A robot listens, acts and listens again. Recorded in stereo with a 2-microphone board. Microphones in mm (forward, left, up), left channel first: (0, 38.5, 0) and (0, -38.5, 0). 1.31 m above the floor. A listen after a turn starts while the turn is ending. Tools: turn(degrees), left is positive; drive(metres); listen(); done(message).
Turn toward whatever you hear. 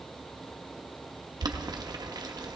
turn(degrees=-60)
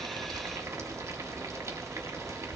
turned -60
turn(degrees=-45)
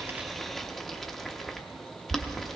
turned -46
done("Facing the boiling, 1 to 2 m away.")